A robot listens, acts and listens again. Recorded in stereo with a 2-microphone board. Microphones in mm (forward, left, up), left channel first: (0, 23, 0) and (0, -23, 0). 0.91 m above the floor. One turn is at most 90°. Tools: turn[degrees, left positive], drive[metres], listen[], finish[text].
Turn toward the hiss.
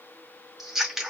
Action: listen[]
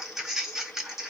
Action: listen[]
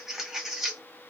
Action: finish[I can't make out a hiss to turn to.]